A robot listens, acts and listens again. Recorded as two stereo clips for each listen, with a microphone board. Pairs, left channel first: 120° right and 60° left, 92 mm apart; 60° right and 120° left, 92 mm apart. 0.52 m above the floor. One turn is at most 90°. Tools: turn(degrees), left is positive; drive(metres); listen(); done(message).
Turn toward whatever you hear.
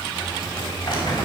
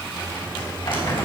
turn(degrees=-80)
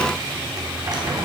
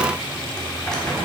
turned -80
turn(degrees=20)
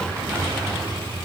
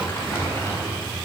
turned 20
done("Found it: crumpling, straight ahead.")